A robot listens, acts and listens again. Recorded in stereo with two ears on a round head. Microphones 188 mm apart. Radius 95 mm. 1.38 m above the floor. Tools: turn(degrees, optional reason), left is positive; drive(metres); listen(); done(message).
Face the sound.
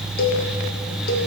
turn(degrees=45, reason="The cowbell: about 45° left or 135° left.")
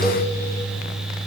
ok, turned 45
listen()
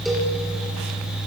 listen()
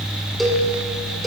done("Facing the cowbell, 1 to 2 m away.")